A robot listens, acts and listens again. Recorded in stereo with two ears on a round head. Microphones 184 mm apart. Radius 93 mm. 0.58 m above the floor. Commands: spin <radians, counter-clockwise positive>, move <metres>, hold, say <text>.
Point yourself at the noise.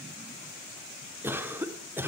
spin -0.52
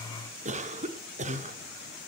spin -2.36
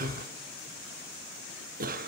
spin -0.87
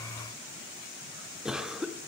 say Facing the cough.